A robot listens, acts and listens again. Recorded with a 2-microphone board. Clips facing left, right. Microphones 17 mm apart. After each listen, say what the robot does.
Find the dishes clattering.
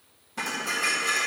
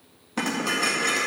Turn 40° right.
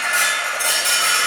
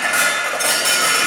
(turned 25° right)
Turn 15° right.
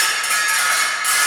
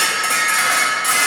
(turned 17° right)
Facing the dishes clattering.